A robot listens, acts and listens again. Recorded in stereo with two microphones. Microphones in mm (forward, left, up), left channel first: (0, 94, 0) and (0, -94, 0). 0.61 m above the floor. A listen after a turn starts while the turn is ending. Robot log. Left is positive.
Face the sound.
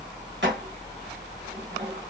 cmd yaw -90
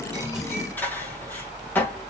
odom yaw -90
note: So it is at 10° left.
cmd yaw +10
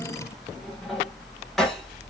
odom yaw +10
end: Facing the dishes clattering.